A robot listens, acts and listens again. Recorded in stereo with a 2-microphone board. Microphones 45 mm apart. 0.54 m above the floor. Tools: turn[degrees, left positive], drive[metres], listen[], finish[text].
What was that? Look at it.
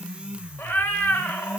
Thought: The cat meowing: about 50° left or 130° left.
Action: turn[50]
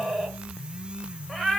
Action: finish[Found it: a cat meowing, straight ahead, under 1 m away.]